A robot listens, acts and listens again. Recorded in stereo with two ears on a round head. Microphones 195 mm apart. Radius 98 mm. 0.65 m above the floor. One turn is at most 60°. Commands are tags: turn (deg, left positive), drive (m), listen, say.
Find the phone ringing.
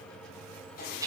<listen/>
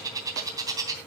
<listen/>
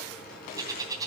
<say>I can't make out a phone ringing, only a bird.</say>